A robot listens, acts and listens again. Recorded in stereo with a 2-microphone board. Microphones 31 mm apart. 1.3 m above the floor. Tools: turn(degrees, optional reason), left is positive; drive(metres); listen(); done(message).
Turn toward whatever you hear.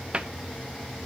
turn(degrees=-35, reason="The cupboard door: about 35° right or 145° right.")
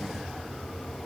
listen()
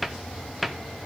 done("Facing the cupboard door, under 1 m away.")